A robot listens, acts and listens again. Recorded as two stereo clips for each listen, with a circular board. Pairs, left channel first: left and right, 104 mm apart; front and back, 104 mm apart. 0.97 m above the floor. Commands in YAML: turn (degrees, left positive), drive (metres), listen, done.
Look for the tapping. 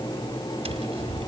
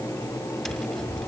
turn: -90
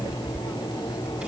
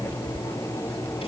turn: -15
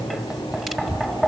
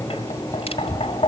done: "Facing the tapping, 1 to 2 m away."